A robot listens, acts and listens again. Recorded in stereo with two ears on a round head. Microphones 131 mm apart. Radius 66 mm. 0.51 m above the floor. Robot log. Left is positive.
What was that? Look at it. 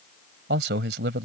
note: The man speaking: about 75° right or 105° right.
cmd yaw -75
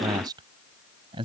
note: So it is at 35° right.
cmd yaw -35
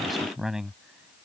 end: Facing the man speaking.